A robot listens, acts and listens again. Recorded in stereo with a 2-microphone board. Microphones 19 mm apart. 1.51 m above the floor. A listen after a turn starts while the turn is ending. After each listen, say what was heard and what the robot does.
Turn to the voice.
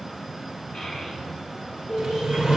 The child speaking: about 25° left or 155° left. Turn 25° left.
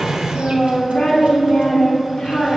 So it is at 125° left. Turn 125° left.
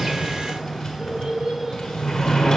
The child speaking is now 30° right. Turn 30° right.
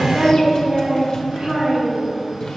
The child speaking is now 20° right. Turn 20° right.
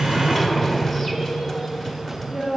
Found it: a child speaking, straight ahead.